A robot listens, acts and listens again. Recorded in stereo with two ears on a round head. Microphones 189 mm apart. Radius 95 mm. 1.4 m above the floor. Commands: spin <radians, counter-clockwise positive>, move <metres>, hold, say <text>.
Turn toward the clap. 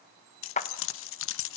spin 0.61
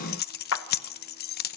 spin 1.92
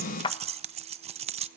spin 0.44
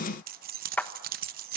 spin 0.17
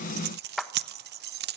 say Found it: a clap, straight ahead, 1 to 2 m away.